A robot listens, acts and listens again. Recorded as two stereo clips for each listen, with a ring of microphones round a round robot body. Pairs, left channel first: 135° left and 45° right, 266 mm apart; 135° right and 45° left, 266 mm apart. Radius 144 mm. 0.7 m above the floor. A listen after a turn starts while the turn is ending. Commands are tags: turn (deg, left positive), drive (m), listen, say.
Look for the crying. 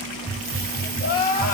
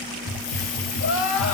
<turn deg="-165"/>
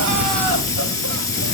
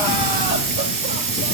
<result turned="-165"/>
<listen/>
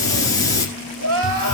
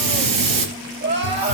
<say>Found it: crying, straight ahead.</say>